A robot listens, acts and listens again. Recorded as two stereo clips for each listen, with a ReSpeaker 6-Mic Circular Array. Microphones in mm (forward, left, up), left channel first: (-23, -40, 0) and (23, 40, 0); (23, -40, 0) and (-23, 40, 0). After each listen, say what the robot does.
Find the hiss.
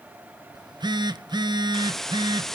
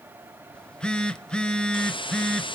Turn 35° right.
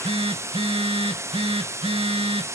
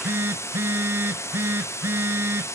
Found it: a hiss, straight ahead.